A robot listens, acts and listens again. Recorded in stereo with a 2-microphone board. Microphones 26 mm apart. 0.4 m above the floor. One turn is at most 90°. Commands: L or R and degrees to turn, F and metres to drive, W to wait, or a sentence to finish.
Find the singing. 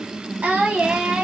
R60
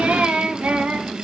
R75
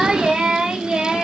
R30
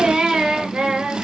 R25
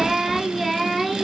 Found it: singing, straight ahead, 2 to 4 m away.